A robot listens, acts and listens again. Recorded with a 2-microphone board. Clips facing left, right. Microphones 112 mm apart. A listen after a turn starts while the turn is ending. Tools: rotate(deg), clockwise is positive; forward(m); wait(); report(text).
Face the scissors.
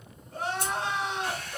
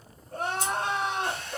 rotate(-60)
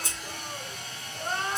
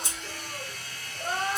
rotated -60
wait()
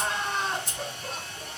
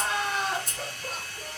report("Facing the scissors.")